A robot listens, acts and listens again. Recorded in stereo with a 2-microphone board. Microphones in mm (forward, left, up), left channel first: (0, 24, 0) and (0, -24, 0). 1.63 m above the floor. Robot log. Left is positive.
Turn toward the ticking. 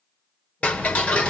note: The ticking: about 25° left or 155° left.
cmd yaw +25
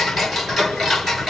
end: Facing the ticking, 1 to 2 m away.